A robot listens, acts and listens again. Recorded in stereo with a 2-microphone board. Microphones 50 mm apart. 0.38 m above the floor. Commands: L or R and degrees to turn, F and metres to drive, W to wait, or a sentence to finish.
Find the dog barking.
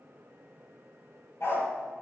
L55
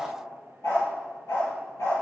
L80
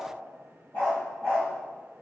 L45
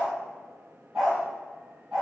R10
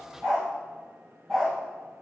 Found it: a dog barking, straight ahead.